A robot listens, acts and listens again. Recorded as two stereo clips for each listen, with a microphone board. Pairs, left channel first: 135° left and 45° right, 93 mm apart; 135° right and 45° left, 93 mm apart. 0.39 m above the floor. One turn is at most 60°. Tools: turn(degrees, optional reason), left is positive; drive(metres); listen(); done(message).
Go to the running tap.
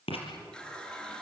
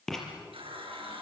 turn(degrees=55, reason="The running tap: 55° left.")
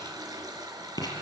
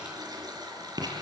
drive(metres=1.0)
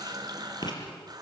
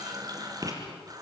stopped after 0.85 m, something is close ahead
done("Something is in my way. I am facing the running tap but have not reached it.")